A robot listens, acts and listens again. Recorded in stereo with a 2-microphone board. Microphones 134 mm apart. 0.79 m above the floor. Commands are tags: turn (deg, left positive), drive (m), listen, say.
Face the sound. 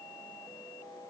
<listen/>
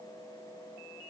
<listen/>
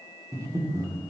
<turn deg="-25"/>
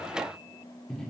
<say>Facing the breathing, 1 to 2 m away.</say>